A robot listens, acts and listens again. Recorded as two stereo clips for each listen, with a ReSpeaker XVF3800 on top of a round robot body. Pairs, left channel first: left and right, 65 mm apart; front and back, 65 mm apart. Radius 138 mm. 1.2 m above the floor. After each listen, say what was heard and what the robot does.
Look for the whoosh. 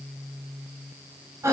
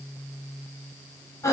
Keep listening.
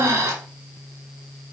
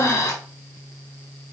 Keep listening.
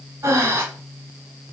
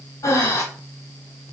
I can't make out a whoosh, only breathing.